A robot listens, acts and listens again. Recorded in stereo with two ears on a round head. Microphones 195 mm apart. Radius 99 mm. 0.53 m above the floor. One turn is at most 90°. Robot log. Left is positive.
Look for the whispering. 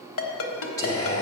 note: The whispering: about 15° left or 165° left.
cmd yaw +15
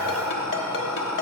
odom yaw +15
end: Found it: whispering, straight ahead, 1 to 2 m away.